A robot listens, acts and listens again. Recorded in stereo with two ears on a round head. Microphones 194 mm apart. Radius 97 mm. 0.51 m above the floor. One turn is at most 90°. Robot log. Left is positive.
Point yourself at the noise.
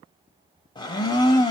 note: The blender: about 20° left or 160° left.
cmd yaw +20
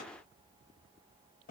cmd idle
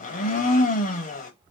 note: So it is at 140° left.
cmd yaw +90
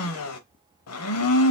note: The blender is now 85° left.
cmd yaw +85
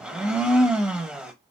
end: Facing the blender.